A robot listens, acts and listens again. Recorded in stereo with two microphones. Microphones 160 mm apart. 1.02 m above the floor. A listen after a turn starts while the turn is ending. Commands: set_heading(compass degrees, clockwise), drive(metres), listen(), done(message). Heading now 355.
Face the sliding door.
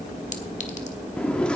set_heading(325)
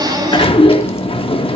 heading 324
set_heading(184)
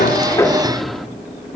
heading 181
done("Facing the sliding door, under 1 m away.")